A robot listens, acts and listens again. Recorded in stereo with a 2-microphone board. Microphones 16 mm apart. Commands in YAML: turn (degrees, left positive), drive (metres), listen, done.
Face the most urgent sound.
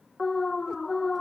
turn: 25
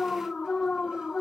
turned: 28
turn: 125
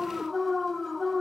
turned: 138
turn: -10
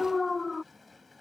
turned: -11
done: "Found it: an alarm, straight ahead."